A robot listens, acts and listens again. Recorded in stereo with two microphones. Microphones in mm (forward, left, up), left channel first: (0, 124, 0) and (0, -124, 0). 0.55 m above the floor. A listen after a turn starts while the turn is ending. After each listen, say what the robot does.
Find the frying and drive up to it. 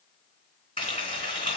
Turn 20° left.
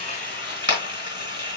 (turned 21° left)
Turn 140° left.
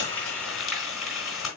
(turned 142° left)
Drive 1.0 m forward.
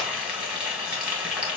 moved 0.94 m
Drive 1.0 m forward.
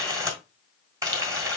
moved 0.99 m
Turn 15° right.
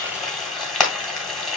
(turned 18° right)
Drive 1.0 m forward.
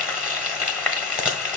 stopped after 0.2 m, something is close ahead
I am next to the frying.